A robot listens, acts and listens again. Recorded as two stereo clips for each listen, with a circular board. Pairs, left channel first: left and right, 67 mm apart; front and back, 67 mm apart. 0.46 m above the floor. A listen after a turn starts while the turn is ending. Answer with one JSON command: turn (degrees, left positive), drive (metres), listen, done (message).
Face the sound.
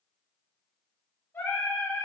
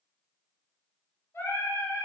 {"turn": 50}
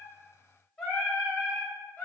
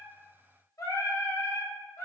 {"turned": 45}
{"turn": 35}
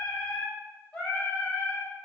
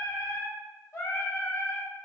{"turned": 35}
{"turn": 25}
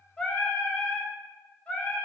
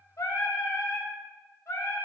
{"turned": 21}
{"turn": 20}
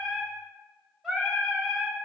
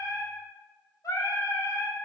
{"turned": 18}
{"done": "Found it: singing, straight ahead, 1 to 2 m away."}